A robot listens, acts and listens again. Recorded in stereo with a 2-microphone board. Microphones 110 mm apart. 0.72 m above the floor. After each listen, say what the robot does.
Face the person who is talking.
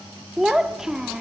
Turn 30° right.
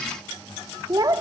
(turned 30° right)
Turn 145° right.
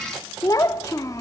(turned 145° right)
Turn 30° left.
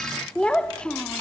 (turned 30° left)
Turn 10° left.
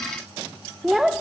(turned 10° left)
Facing the child speaking, under 1 m away.